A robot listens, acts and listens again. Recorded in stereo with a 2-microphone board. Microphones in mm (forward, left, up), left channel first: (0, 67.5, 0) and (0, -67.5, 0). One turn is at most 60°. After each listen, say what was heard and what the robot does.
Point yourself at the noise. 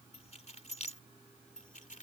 The keys jangling: about 70° left or 110° left. Turn 60° left.
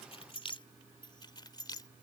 So it is at 30° left. Turn 30° left.
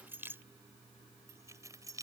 The keys jangling is now 25° right. Turn 25° right.
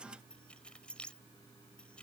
The keys jangling is now 10° left. Turn 10° left.
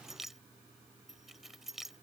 Found it: keys jangling, straight ahead.